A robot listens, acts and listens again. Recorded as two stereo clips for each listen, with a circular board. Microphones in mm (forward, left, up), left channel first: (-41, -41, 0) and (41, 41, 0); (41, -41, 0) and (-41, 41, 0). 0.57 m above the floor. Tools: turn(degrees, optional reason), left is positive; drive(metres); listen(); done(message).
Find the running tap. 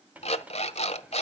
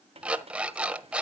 turn(degrees=120, reason="The running tap: 120° left.")
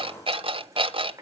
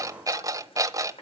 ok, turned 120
turn(degrees=-15, reason="The running tap is now 15° right.")
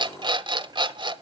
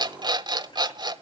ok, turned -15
done("Found it: a running tap, straight ahead.")